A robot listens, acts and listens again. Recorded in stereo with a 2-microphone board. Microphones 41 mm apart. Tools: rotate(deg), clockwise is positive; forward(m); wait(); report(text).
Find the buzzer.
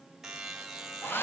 rotate(30)
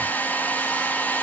wait()
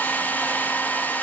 wait()
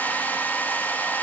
report("I heard a buzzer, but can't make it out now. It was about 20° left or 140° right.")